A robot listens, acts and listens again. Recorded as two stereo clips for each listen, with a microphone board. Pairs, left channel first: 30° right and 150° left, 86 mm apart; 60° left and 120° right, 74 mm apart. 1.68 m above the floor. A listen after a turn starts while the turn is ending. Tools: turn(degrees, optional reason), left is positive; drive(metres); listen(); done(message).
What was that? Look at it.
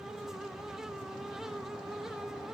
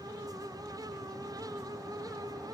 listen()
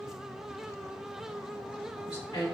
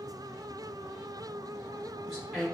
turn(degrees=-30, reason="The woman speaking: 30° right.")
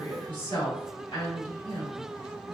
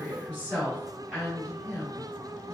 turn(degrees=-15, reason="The woman speaking is now 15° right.")
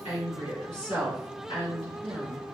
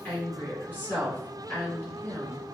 done("Found it: a woman speaking, straight ahead.")